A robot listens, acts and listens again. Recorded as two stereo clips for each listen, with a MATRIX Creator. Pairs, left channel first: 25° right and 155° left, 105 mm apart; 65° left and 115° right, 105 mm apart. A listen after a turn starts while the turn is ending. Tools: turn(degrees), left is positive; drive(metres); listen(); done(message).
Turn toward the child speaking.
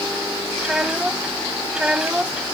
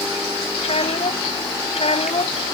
turn(degrees=75)
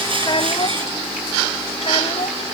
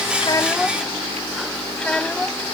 turn(degrees=-10)
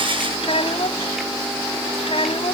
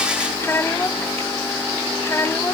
done("Facing the child speaking.")